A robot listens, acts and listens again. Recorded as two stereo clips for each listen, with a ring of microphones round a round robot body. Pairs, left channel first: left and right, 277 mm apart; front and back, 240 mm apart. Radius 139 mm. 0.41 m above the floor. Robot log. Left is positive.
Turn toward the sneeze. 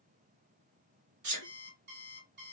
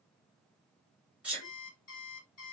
note: The sneeze: 95° right.
cmd yaw -95
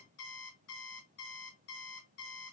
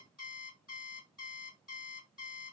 end: I heard a sneeze from this way, but can't make it out now.